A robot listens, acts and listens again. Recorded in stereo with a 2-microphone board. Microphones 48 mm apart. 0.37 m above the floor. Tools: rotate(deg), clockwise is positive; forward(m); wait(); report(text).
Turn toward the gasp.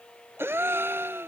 rotate(65)
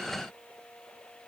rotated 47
wait()
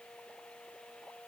report("I heard a gasp, but can't make it out now. It was about 20° right or 65° right.")